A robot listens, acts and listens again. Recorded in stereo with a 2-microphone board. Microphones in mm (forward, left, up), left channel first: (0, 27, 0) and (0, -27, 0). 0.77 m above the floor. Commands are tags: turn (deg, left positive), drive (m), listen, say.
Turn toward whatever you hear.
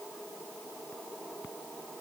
<listen/>
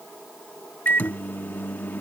<turn deg="40"/>
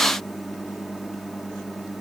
<say>Facing the microwave.</say>